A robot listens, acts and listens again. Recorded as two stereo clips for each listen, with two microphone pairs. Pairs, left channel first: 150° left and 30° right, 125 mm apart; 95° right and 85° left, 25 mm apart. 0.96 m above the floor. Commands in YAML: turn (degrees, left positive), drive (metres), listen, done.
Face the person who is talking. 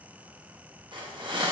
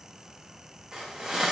listen: true
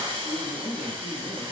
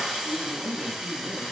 turn: 130
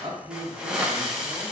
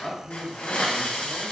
turn: -55
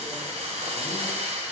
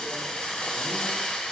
listen: true
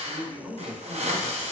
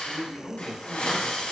turn: -35
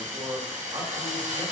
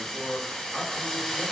done: "Facing the man speaking."